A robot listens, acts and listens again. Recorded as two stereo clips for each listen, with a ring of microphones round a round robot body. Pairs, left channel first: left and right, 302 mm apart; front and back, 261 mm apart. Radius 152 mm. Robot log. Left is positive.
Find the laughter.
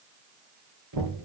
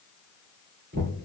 cmd idle
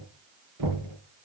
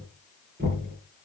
cmd idle
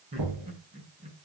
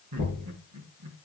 note: The laughter: 160° right.
cmd yaw -160
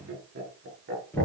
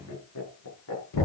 note: The laughter is now 35° right.
cmd yaw -35
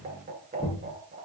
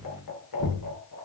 note: The laughter is now 20° right.
cmd yaw -20
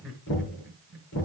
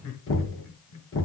end: Found it: laughter, straight ahead, over 4 m away.